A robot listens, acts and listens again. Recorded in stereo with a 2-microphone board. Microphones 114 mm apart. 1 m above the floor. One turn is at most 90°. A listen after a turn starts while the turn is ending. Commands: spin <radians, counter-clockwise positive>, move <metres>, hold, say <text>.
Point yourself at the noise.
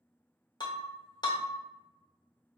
spin 0.70
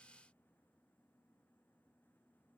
hold
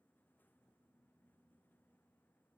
say I heard breaking glass, but can't make it out now. It was about straight ahead or 100° left.